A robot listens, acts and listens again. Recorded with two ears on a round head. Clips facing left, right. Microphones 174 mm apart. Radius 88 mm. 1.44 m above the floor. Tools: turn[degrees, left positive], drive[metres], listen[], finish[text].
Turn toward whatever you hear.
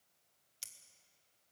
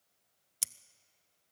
Thought: The scissors: about 65° right or 115° right.
Action: turn[-65]
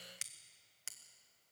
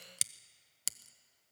Thought: So it is at 45° right.
Action: turn[-45]
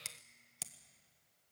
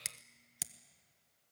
Thought: The scissors is now 15° right.
Action: turn[-15]
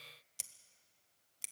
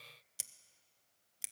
Action: finish[Facing the scissors.]